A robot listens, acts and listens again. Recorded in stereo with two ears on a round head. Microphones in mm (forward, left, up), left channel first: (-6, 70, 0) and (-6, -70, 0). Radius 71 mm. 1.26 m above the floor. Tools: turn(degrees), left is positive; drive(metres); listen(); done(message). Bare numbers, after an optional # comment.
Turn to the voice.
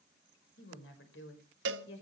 turn(90)
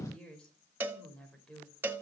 done("Facing the woman speaking.")